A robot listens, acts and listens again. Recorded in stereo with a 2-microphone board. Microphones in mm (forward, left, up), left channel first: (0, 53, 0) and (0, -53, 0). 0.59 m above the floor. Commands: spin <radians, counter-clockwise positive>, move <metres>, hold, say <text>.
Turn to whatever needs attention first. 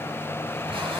hold
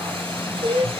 spin -1.13
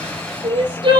spin -0.87
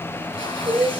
spin -0.17
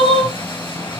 say Found it: crying, straight ahead, over 4 m away.